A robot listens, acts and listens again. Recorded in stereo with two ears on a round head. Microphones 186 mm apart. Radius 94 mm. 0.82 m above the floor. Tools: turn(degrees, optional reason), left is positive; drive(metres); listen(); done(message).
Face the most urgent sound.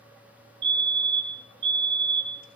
turn(degrees=-60, reason="The fire alarm: about 60° right or 120° right.")
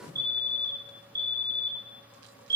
turn(degrees=-20, reason="So it is at 20° right.")
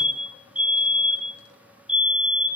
done("Facing the fire alarm.")